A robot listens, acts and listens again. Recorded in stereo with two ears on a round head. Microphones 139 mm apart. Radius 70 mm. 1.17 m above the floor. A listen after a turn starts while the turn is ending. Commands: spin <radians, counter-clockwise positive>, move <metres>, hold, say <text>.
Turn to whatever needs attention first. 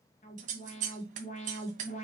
spin 0.87
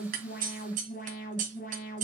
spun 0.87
spin 1.13
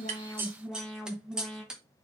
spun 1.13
say Found it: an alarm, straight ahead, 2 to 4 m away.